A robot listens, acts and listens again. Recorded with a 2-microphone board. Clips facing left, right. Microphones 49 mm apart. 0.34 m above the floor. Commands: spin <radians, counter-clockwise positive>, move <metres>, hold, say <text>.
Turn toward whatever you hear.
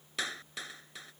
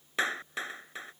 spin -0.52
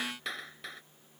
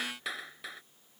say Found it: a clap, straight ahead.